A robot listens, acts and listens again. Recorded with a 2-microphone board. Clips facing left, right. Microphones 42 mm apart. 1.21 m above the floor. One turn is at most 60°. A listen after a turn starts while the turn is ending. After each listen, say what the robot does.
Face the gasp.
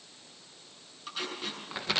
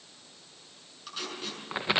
Keep listening.
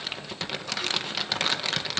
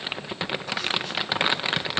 Keep listening.
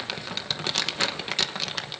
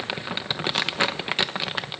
I can't make out a gasp to turn to.